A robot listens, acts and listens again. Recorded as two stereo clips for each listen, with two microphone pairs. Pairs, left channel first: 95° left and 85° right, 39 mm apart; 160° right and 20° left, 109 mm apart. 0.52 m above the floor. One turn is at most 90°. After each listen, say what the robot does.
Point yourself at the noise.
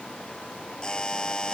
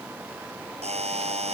Turn 30° left.
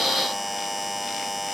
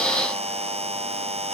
Found it: a buzzer, straight ahead.